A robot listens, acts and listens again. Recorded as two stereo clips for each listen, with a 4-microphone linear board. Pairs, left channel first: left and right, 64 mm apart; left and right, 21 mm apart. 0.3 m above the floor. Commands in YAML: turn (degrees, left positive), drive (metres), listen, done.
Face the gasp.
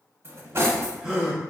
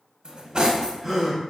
turn: -30
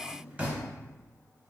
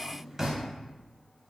listen: true
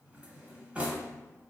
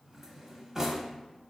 done: "I heard a gasp, but can't make it out now. It was about 25° left or 145° right."